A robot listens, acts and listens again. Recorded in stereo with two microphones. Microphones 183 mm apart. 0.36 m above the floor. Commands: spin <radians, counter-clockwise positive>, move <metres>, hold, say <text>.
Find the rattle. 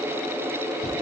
hold
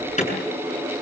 hold
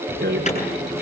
spin -1.13
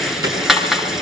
say Facing the rattle, 2 to 4 m away.